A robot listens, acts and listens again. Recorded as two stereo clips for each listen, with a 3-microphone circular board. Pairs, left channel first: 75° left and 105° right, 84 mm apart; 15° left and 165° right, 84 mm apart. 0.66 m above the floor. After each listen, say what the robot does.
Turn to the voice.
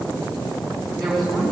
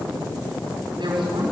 Turn 165° left.
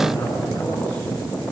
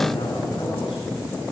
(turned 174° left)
Found it: a woman speaking, straight ahead, over 4 m away.